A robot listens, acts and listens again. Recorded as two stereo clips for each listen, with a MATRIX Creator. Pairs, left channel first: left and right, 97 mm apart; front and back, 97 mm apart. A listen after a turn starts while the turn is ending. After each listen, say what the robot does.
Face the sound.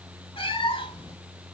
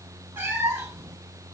Turn 120° left.
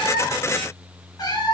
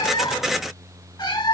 Turn 45° left.
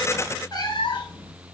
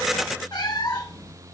Turn 50° left.
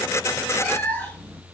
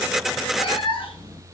Turn 15° left.
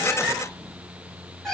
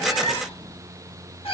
Facing the cat meowing, 1 to 2 m away.